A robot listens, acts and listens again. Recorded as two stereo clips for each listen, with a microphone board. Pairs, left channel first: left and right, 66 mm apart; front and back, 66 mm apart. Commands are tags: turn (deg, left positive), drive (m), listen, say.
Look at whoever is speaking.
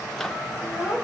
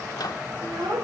<turn deg="-165"/>
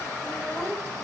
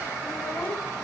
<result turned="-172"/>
<turn deg="10"/>
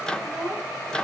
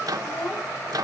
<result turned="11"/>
<say>Found it: a child speaking, straight ahead, 2 to 4 m away.</say>